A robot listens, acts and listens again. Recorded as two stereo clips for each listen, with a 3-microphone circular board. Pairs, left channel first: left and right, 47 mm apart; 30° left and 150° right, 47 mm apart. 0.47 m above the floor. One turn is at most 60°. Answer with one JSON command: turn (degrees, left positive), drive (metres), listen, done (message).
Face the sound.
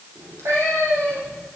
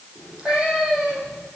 {"turn": -60}
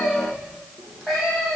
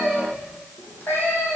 {"done": "Facing the cat meowing, 2 to 4 m away."}